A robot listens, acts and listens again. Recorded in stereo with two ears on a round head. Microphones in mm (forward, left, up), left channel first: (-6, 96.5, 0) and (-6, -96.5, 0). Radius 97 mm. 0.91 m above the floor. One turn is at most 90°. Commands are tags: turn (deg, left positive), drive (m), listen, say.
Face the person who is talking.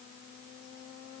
<listen/>
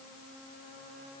<listen/>
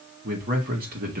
<turn deg="-45"/>
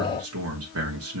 <turn deg="-85"/>
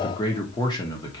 <turn deg="20"/>
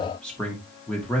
<say>Found it: a man speaking, straight ahead, 1 to 2 m away.</say>